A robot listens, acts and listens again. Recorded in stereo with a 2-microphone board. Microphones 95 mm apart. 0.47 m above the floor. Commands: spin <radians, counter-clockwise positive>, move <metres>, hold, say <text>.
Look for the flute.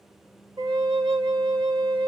spin -0.96
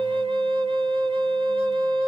spin -1.22
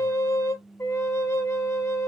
spin 0.52
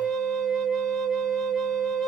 say Facing the flute, 1 to 2 m away.